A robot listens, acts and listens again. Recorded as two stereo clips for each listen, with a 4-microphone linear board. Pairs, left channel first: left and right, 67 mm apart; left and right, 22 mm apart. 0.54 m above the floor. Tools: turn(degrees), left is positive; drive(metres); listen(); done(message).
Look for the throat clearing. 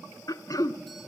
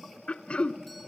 turn(degrees=65)
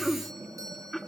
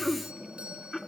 done("Found it: throat clearing, straight ahead.")